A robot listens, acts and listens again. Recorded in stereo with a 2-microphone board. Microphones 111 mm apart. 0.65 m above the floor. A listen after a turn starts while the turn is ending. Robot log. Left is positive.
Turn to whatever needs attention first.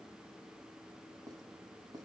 cmd idle
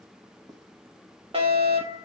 note: The fire alarm: about 60° right or 120° right.
cmd yaw -60
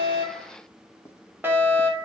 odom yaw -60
note: So it is at 25° right.
cmd yaw -25
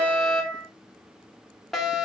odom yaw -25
end: Found it: a fire alarm, straight ahead.